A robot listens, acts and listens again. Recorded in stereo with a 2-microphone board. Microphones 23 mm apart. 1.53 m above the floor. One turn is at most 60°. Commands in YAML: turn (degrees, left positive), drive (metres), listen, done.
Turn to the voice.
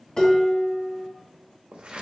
listen: true
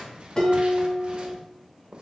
listen: true
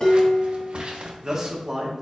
turn: -15
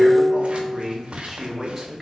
done: "Facing the man speaking."